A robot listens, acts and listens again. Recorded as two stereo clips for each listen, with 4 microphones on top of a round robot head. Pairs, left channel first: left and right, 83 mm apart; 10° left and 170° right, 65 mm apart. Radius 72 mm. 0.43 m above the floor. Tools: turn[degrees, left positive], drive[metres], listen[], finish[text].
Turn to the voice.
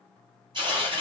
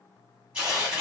Action: listen[]
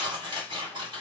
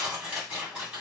Action: listen[]
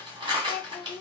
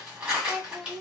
Thought: The child speaking: 110° left.
Action: turn[110]
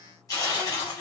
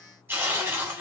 Action: listen[]
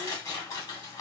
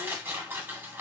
Action: listen[]
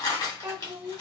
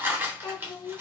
Thought: The child speaking is now 20° right.
Action: turn[-20]
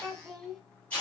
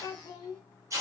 Action: finish[Found it: a child speaking, straight ahead.]